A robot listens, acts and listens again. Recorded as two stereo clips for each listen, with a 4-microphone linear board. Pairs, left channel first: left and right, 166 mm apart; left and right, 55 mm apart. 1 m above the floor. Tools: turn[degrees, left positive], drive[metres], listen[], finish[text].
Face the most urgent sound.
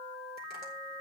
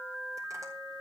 Action: listen[]
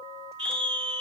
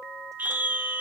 Thought: The scream: about 35° right or 145° right.
Action: turn[-35]
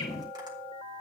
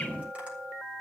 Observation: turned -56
Action: listen[]
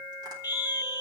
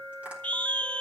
Thought: So it is at 20° left.
Action: turn[20]
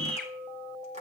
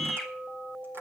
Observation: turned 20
Action: finish[Found it: a scream, straight ahead.]